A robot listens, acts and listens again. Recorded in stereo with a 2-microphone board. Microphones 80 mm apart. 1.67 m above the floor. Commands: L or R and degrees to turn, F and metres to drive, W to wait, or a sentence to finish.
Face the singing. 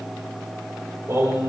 R50
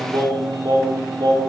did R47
R75
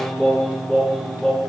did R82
L10
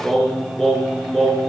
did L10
Found it: singing, straight ahead, over 4 m away.